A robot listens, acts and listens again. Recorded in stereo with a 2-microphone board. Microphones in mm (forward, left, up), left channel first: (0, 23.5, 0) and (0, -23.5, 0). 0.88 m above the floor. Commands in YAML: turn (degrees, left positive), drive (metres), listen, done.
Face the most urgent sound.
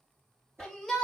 turn: 30
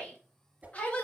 turn: 145
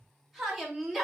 done: "Facing the shout."